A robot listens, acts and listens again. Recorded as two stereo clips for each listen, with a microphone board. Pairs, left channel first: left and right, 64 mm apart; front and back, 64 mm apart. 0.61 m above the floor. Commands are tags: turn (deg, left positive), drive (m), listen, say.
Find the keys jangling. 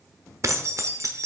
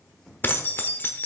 <turn deg="-55"/>
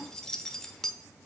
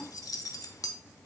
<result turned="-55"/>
<turn deg="10"/>
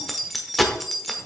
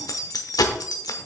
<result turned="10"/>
<say>Found it: keys jangling, straight ahead.</say>